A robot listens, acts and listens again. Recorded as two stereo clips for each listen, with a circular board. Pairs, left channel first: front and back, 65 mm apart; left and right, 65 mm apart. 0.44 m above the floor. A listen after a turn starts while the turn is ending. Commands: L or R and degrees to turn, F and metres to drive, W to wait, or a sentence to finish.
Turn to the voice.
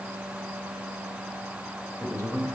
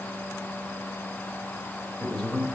L15
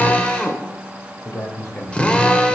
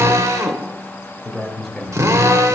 Facing the man speaking, 1 to 2 m away.